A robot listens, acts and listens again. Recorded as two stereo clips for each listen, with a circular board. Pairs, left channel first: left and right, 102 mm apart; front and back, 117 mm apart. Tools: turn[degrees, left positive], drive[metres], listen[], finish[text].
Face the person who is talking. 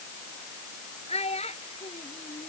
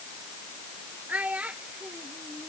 Thought: The child speaking: 100° left.
Action: turn[100]
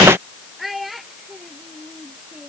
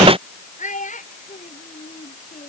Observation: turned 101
Action: finish[Found it: a child speaking, straight ahead.]